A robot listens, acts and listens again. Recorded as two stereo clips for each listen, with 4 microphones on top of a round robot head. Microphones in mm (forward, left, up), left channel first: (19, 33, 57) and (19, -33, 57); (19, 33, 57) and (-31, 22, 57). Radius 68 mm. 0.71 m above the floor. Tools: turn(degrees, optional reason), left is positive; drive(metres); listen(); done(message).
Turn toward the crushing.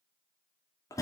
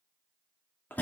listen()
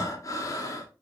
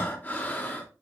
listen()
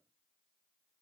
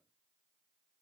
done("I can't make out crushing to turn to.")